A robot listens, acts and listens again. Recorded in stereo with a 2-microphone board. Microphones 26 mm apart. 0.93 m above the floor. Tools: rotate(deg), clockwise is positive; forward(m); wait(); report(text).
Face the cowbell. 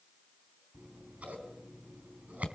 wait()
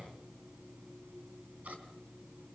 wait()
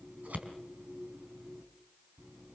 report("I can't make out a cowbell, only scissors.")